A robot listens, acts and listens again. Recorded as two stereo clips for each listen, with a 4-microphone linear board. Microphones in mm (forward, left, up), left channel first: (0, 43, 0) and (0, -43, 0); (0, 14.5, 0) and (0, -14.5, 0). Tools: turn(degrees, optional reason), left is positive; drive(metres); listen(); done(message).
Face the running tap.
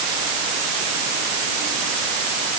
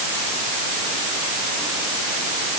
listen()
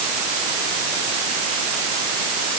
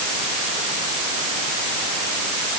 listen()
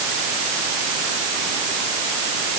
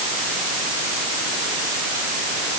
done("I can't make out a running tap to turn to.")